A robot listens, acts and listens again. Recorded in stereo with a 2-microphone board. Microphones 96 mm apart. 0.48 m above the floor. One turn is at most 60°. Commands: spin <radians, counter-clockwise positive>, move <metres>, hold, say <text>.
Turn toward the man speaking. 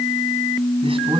spin -1.05
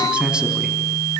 spin -0.17
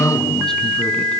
say Facing the man speaking, over 4 m away.